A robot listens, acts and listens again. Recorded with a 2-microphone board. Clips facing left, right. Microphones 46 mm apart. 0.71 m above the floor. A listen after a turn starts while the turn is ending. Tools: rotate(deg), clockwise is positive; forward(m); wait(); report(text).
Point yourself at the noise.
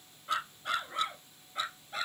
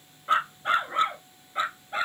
rotate(30)
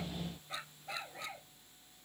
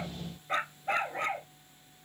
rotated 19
rotate(45)
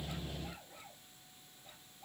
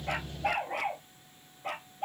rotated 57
rotate(80)
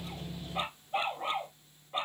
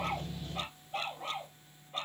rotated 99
rotate(-20)
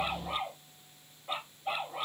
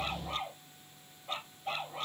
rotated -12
rotate(-10)
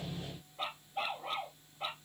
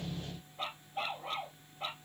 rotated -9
report("Facing the dog barking.")